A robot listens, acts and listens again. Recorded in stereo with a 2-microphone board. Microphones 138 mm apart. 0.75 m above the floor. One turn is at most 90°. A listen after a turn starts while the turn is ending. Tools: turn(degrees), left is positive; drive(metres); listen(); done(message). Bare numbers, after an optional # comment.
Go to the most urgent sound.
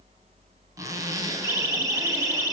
# The siren: about 30° left or 150° left.
turn(30)
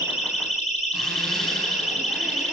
# So it is at 120° left.
turn(90)
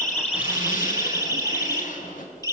# The siren is now 30° left.
turn(30)
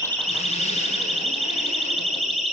drive(1.0)
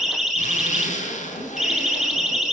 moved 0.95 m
drive(1.0)
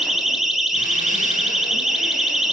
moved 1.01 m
drive(1.0)
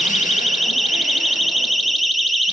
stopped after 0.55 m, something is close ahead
done("I am next to the siren.")